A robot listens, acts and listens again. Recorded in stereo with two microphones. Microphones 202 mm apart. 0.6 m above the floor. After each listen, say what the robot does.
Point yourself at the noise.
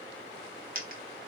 Turn 45° right.
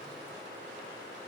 Keep listening.
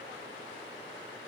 I heard a dropped coin, but can't make it out now. It was about straight ahead or 90° right.